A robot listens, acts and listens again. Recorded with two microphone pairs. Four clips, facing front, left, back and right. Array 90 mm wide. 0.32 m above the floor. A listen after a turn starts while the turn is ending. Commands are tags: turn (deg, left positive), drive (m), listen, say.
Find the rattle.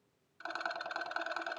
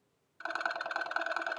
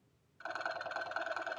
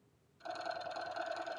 <turn deg="85"/>
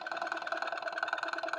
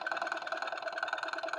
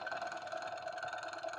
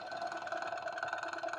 <turn deg="10"/>
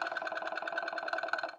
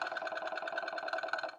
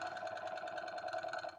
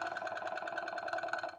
<say>Facing the rattle, 1 to 2 m away.</say>